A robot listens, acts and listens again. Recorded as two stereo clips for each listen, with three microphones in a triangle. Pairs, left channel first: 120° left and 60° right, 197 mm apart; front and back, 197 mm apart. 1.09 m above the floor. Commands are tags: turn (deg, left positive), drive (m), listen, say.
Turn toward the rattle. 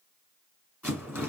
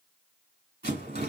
<turn deg="-140"/>
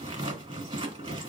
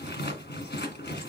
<say>Facing the rattle, 1 to 2 m away.</say>